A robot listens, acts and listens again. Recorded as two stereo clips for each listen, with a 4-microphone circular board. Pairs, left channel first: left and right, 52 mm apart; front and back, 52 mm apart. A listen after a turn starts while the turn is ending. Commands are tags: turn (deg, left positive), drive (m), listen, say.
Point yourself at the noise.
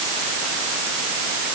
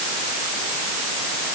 <listen/>
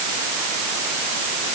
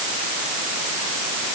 <listen/>
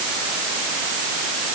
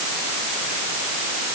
<say>I can't make out anything.</say>